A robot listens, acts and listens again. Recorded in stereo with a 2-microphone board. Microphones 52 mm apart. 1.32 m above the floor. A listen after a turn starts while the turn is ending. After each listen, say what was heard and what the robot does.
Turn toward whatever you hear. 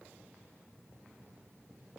Keep listening.
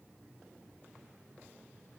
Keep listening.
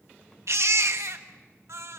The baby crying: about 70° right or 110° right. Turn 70° right.
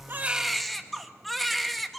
Facing the baby crying.